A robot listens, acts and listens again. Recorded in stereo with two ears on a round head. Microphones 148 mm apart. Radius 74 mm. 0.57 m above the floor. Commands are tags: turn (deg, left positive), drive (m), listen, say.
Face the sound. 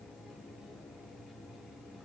<listen/>
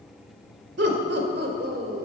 <turn deg="-60"/>
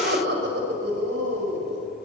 <turn deg="-70"/>
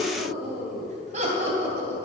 <turn deg="-40"/>
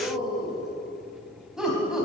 <say>Found it: laughter, straight ahead, 2 to 4 m away.</say>